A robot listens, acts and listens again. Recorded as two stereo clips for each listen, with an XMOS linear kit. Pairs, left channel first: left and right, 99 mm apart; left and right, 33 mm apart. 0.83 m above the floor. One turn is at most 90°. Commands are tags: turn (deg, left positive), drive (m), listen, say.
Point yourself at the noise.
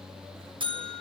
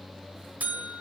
<turn deg="-55"/>
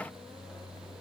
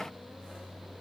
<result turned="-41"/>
<listen/>
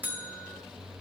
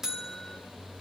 <turn deg="-15"/>
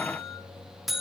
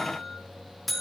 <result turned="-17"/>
<say>Facing the buzzer.</say>